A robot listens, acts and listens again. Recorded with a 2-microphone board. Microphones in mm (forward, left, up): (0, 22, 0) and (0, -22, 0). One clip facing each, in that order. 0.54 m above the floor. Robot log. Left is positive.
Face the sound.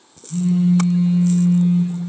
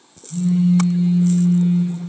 note: The phone buzzing: about 40° left or 140° left.
cmd yaw +40
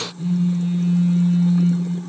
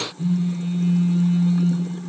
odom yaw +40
end: Facing the phone buzzing, 2 to 4 m away.